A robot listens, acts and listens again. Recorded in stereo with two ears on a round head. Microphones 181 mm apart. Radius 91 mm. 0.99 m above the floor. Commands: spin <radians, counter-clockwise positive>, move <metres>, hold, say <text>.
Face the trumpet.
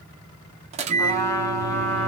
spin 0.52
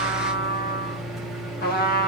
spin 2.36
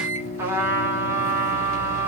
spin -0.17
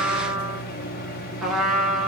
say Facing the trumpet.